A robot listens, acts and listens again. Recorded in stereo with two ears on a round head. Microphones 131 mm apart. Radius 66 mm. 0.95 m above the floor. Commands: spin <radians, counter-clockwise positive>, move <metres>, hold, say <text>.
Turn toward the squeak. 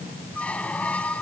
spin 0.52
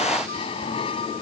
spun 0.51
spin 2.53
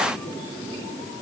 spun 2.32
spin 0.17
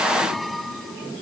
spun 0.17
say Facing the squeak.